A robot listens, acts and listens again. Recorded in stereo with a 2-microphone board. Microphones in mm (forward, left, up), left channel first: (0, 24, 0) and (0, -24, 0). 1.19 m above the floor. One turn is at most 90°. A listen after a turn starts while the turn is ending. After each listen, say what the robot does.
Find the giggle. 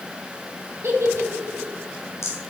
Turn 90° right.
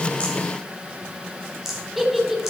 Found it: a giggle, straight ahead, 2 to 4 m away.